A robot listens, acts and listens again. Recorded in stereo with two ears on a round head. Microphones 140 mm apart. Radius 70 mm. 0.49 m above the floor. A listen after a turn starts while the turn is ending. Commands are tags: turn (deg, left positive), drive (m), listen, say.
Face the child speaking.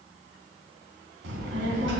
<turn deg="-90"/>
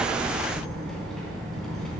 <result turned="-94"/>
<say>Facing the child speaking.</say>